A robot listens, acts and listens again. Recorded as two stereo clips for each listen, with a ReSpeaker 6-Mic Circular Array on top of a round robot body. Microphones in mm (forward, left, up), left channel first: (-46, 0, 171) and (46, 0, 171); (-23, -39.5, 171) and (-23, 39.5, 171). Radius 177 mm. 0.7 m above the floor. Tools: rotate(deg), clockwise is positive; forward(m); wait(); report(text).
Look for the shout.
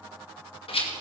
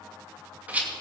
wait()
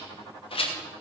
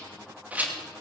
wait()
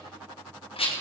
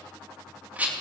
report("I can't make out a shout to turn to.")